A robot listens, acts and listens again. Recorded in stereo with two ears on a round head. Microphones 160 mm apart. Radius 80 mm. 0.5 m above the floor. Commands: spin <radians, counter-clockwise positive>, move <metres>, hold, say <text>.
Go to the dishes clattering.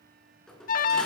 spin 0.52
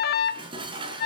spin -0.52
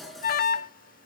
move 1.0
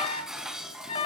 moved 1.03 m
move 1.0
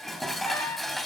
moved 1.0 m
move 1.0
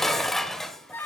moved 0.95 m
move 1.0
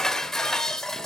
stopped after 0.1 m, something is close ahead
say Arrived at the dishes clattering, straight ahead.